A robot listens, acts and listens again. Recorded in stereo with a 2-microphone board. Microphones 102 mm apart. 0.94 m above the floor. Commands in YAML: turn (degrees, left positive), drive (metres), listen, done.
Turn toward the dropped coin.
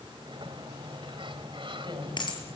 turn: 50
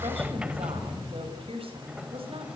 listen: true
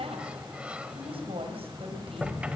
done: "I heard a dropped coin, but can't make it out now. It was about straight ahead or 80° left."